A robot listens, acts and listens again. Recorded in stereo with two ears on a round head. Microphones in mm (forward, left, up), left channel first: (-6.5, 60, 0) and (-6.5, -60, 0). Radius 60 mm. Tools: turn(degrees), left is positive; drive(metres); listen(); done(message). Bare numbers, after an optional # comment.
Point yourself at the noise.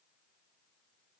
listen()
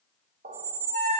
# The squeak: about 55° right or 125° right.
turn(-55)
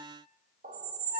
# So it is at 65° right.
turn(-65)
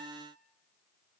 listen()
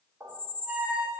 # The squeak is now 15° right.
turn(-15)
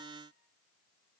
listen()
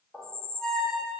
done("Found it: a squeak, straight ahead, under 1 m away.")